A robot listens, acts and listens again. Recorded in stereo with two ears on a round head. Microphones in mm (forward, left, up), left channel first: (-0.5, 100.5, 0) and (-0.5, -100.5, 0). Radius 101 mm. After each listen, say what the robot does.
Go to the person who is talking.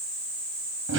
Keep listening.
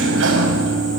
Keep listening.
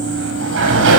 I can't make out anyone speaking to turn to.